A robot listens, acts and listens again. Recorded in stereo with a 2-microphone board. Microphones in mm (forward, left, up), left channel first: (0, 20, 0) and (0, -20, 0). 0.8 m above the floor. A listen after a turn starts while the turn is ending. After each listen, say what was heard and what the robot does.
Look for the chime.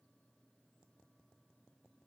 Keep listening.
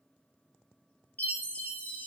The chime: about 45° left or 135° left. Turn 45° left.
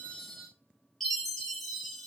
Found it: a chime, straight ahead.